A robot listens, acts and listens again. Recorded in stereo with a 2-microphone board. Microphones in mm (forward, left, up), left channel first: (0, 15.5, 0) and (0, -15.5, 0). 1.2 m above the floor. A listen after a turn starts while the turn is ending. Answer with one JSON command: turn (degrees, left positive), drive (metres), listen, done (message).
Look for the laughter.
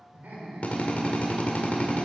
{"turn": -90}
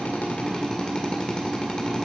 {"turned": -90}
{"listen": true}
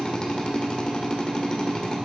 {"listen": true}
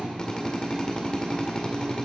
{"done": "Facing where the laughter came from. I can't hear it now."}